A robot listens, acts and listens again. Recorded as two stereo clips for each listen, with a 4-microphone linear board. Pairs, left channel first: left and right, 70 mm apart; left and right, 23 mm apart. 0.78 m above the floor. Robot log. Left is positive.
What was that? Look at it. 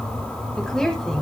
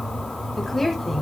cmd yaw +30
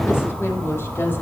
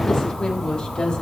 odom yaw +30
note: So it is at 145° left.
cmd yaw +145
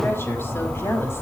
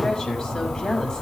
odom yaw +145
note: The woman speaking is now 35° left.
cmd yaw +35
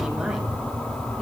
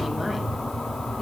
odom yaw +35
cmd idle
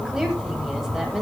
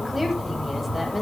note: The woman speaking is now 10° right.
cmd yaw -10
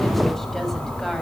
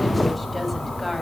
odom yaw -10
end: Facing the woman speaking.